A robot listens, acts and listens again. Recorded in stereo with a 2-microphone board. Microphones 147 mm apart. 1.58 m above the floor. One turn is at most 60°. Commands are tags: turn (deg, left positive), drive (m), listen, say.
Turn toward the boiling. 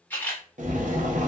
<turn deg="-60"/>
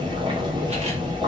<turn deg="-40"/>
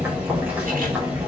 <turn deg="-10"/>
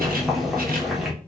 <say>Facing the boiling, under 1 m away.</say>